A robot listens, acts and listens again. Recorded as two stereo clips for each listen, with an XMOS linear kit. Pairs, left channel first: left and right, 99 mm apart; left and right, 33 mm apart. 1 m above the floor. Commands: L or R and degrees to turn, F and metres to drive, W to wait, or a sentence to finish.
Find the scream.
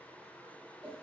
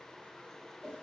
W
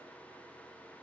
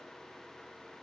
W
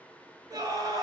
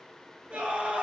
R35
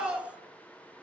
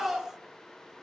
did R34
R10
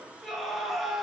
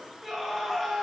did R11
Facing the scream, 1 to 2 m away.